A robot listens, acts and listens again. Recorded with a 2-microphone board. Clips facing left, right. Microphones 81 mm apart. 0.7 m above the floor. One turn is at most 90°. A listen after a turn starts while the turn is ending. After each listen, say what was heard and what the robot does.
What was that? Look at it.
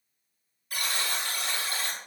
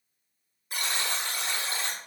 The buzzer: about 25° right or 155° right. Turn 25° right.
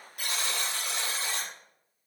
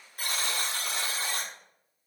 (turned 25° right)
So it is at 130° right. Turn 90° right.
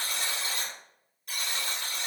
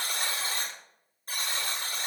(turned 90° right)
The buzzer is now 40° right. Turn 40° right.
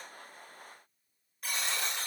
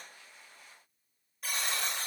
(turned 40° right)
Facing the buzzer.